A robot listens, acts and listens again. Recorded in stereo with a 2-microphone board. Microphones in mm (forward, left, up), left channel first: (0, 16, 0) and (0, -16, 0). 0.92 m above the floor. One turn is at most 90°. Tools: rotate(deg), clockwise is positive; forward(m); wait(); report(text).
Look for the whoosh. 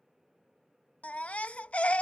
wait()
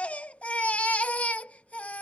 wait()
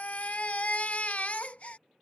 report("I can't make out a whoosh, only a baby crying.")